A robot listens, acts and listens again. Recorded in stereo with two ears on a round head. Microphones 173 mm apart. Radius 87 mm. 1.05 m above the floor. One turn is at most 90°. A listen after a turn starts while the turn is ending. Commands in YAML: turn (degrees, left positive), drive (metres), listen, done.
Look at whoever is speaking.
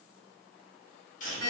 listen: true
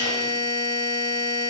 listen: true
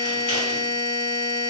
done: "I can't make out anyone speaking to turn to."